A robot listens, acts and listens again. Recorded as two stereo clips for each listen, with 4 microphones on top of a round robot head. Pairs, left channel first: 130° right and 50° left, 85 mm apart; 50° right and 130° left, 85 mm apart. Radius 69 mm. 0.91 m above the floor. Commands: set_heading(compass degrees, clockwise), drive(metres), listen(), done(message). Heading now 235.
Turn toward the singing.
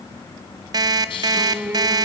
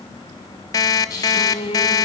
set_heading(260)
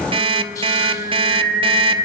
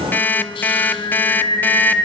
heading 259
set_heading(249)
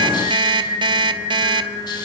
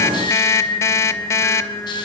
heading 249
set_heading(239)
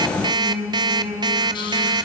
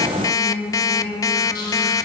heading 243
done("Found it: singing, straight ahead, over 4 m away.")